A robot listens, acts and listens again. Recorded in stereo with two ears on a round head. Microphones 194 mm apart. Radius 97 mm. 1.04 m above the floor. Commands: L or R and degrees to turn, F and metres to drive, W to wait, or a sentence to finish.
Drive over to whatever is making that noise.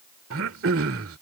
R75
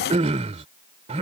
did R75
R35
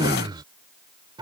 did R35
R20
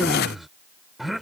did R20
F1.0
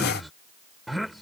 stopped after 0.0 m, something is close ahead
Something is in my way. I am facing the throat clearing but have not reached it.